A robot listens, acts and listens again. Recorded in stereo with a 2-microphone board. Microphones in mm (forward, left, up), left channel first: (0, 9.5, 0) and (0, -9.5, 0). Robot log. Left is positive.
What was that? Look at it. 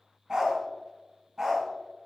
note: The dog barking: about 35° right or 145° right.
cmd yaw -35
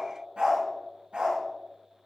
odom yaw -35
note: So it is at 115° right.
cmd yaw -115
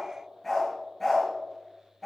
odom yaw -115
note: The dog barking is now 20° left.
cmd yaw +20
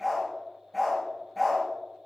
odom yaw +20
end: Facing the dog barking, over 4 m away.